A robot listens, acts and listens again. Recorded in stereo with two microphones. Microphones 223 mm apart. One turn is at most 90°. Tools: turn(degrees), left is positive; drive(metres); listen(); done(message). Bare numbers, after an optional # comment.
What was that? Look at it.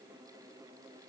listen()
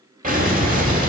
# The explosion: about 40° right or 140° right.
turn(-40)
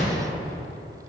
listen()
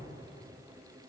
done("I heard an explosion, but can't make it out now. It was about straight ahead or 100° right.")